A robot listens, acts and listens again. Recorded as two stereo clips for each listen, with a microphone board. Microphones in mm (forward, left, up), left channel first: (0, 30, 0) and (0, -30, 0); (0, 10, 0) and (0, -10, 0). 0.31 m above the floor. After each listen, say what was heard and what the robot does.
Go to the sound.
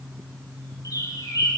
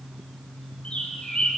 Turn 90° left.
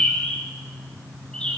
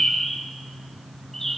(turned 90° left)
So it is at 15° left. Turn 15° left.
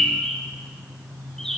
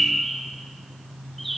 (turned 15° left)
The bird is now 10° left. Turn 10° left.
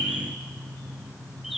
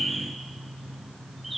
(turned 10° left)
Drive 1.0 m forward.
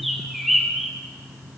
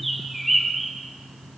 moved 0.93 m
Drive 1.0 m forward.
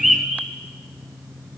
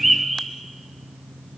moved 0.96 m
Drive 1.0 m forward.
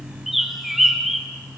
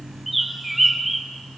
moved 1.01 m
Drive 1.0 m forward.
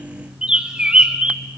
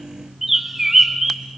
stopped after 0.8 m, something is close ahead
The bird is now 15° right. Turn 15° right.
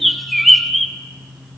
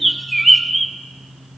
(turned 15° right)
I am next to the bird.